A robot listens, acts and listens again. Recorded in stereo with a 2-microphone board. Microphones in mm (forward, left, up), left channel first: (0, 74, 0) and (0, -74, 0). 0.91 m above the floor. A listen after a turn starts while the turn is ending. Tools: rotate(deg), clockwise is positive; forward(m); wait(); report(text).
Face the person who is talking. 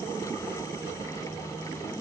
wait()
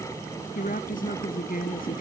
rotate(-75)
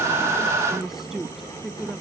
report("Found it: a woman speaking, straight ahead.")